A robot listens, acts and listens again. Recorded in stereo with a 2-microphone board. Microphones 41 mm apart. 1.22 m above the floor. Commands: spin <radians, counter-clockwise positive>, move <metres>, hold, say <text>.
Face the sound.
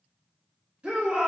spin -0.61
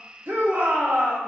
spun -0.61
spin -1.92
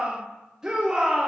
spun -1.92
spin -0.17
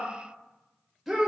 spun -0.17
say Facing the shout, 1 to 2 m away.